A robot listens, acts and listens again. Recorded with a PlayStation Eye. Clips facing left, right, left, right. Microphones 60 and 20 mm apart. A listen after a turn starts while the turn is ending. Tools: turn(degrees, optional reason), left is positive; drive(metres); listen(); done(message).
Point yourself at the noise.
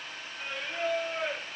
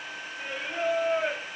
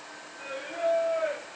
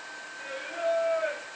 turn(degrees=-20, reason="The singing: about 20° right or 160° right.")
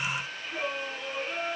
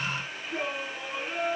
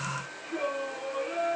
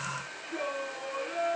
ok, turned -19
done("Facing the singing.")